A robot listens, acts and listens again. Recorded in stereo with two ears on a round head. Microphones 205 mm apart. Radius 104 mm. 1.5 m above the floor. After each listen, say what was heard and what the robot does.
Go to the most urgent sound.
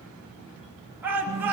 Turn 30° right.
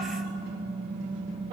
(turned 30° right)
Keep listening.
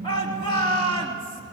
So it is at 20° left. Turn 20° left.
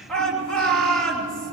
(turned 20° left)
Drive 1.0 m forward.
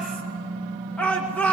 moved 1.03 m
Drive 1.0 m forward.
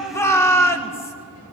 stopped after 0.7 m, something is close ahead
The shout is now 10° left. Turn 10° left.
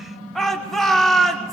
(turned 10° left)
Arrived at the shout, straight ahead.